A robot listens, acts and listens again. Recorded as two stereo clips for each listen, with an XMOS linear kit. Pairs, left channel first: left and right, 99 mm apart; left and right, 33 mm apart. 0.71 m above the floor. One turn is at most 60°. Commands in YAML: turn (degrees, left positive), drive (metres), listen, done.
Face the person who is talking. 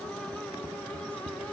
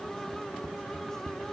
listen: true
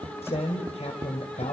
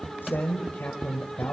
turn: 60
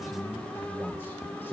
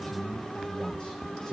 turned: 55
turn: 25
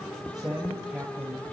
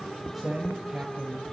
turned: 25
turn: -10
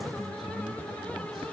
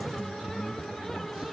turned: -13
done: "Facing the man speaking, over 4 m away."